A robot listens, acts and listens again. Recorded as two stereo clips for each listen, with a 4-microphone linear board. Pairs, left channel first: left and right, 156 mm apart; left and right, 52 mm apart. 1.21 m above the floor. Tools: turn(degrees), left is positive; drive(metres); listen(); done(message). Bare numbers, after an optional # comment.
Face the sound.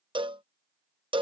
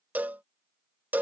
# The cowbell: about 35° right or 145° right.
turn(-35)
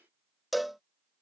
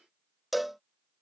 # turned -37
done("Facing the cowbell.")